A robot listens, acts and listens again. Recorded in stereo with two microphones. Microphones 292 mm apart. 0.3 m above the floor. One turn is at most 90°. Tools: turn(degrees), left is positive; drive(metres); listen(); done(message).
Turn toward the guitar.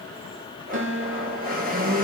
turn(degrees=-60)
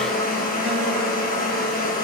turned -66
listen()
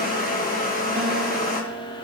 turn(degrees=-25)
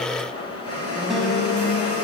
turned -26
listen()
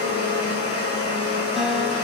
listen()
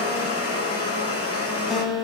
done("Facing the guitar, 1 to 2 m away.")